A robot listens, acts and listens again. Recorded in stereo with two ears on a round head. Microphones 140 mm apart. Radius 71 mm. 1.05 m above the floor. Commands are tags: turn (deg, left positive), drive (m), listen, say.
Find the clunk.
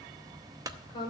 <turn deg="-20"/>
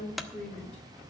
<say>Found it: a clunk, straight ahead.</say>